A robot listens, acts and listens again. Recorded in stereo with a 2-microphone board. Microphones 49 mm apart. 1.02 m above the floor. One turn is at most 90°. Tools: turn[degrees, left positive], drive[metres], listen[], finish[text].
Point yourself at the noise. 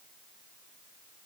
Action: listen[]
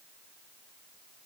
Action: listen[]
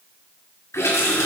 Action: turn[90]
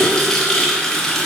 Thought: So it is at 15° left.
Action: turn[15]
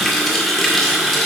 Action: finish[Found it: a running tap, straight ahead.]